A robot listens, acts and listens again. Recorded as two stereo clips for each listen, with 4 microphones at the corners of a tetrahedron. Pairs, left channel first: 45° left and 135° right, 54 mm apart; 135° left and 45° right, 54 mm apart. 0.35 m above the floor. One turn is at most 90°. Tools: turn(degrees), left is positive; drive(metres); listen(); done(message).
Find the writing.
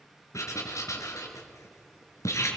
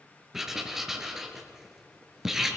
turn(degrees=40)
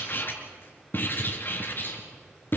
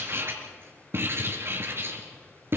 done("Facing the writing, 2 to 4 m away.")